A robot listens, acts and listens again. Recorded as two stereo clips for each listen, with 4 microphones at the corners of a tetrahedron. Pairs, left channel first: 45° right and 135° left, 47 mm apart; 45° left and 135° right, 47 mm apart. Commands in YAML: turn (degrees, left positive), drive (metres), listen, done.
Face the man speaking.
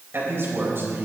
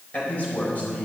turn: 100
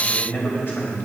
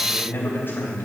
done: "Facing the man speaking."